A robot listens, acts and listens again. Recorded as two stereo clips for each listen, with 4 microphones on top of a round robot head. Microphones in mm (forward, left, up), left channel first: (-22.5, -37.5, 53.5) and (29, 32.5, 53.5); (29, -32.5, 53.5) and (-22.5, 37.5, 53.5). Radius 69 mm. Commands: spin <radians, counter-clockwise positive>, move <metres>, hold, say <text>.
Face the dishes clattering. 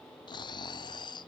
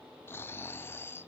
hold
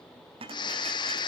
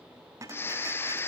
spin 1.22
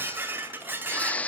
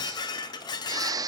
spin -0.26
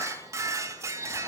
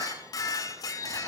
say Facing the dishes clattering, 2 to 4 m away.